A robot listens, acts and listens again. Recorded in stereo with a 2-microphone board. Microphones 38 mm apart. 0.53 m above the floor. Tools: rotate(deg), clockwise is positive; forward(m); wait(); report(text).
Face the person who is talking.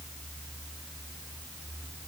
wait()
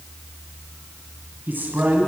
rotate(55)
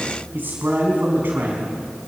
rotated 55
rotate(65)
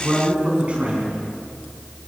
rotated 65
rotate(35)
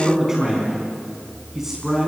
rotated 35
rotate(10)
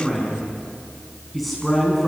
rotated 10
report("Facing the man speaking, over 4 m away.")